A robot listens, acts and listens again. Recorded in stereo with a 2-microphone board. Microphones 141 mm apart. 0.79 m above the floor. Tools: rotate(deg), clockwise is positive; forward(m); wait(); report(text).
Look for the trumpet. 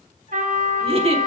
rotate(90)
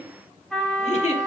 report("Facing the trumpet.")